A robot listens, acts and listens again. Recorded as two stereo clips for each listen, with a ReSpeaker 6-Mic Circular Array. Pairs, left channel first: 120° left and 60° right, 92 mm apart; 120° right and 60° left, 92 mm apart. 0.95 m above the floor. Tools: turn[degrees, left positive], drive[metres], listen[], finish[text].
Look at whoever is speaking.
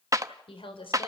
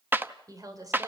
Thought: The woman speaking: 110° left.
Action: turn[110]
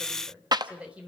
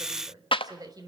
Thought: The woman speaking is now 15° left.
Action: turn[15]
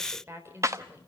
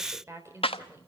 Action: finish[Facing the woman speaking, 2 to 4 m away.]